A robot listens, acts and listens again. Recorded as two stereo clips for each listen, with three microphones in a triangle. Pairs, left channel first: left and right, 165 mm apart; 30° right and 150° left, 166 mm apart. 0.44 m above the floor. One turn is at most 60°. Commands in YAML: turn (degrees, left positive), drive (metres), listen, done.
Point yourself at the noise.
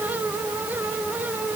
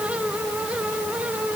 listen: true
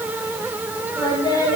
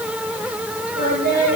turn: 60
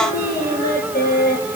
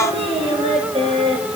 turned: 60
turn: 60
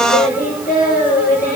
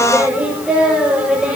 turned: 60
turn: 60
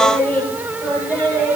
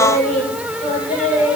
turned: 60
turn: 10
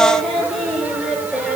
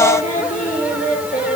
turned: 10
done: "Facing the singing."